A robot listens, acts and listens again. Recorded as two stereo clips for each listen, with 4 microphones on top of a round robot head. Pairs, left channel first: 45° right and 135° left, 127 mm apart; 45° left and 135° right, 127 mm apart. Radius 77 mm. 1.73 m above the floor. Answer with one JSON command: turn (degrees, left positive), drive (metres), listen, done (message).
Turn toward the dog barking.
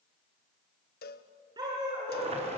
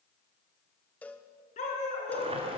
{"turn": 75}
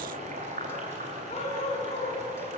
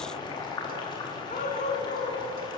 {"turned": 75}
{"done": "Found it: a dog barking, straight ahead, over 4 m away."}